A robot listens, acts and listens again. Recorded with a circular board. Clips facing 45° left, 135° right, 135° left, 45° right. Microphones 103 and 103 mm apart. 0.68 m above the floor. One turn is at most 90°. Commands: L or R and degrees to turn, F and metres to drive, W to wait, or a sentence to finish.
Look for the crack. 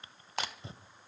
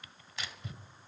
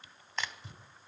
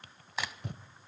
L35
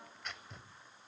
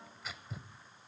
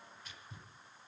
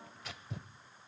Facing where the crack came from. I can't hear it now.